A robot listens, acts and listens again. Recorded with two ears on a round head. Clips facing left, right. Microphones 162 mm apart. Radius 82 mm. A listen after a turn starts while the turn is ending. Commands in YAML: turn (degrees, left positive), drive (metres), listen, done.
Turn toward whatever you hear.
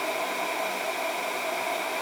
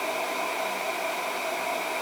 listen: true
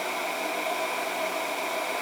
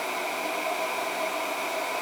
listen: true
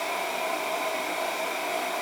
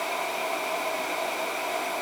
done: "I can't make out anything."